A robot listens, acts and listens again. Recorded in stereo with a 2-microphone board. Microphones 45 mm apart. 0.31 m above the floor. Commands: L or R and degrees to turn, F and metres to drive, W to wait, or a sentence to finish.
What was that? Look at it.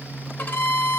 L40
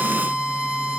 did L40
Found it: a violin, straight ahead.